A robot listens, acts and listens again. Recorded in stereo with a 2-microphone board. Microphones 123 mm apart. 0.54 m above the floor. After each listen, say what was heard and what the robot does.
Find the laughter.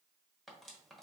Keep listening.
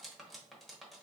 Keep listening.
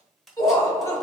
The laughter: about 30° left or 150° left. Turn 30° left.
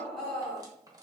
Facing the laughter.